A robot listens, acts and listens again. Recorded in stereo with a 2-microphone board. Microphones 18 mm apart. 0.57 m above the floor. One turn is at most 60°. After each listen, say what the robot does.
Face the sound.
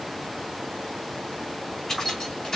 Turn 40° left.
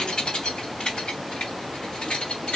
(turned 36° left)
Turn 60° left.
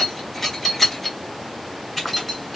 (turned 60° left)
Facing the keys jangling, 2 to 4 m away.